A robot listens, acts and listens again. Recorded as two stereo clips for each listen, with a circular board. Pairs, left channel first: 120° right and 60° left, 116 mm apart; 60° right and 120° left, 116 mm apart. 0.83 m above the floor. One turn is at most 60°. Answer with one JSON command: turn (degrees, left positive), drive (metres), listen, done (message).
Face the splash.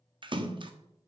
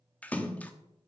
{"turn": 15}
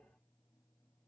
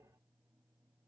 {"done": "I heard a splash from this way, but can't make it out now."}